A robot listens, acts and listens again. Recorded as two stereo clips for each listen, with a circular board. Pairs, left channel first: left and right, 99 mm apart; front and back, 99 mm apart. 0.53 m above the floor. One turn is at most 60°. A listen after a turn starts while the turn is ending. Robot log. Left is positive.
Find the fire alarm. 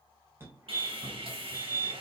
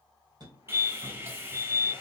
note: The fire alarm: 150° right.
cmd yaw -60
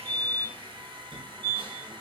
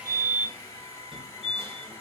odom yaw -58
note: The fire alarm is now 90° right.
cmd yaw -60
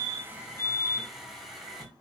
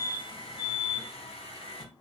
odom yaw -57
note: The fire alarm is now 35° right.
cmd yaw -35
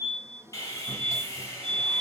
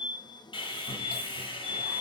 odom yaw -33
end: Found it: a fire alarm, straight ahead.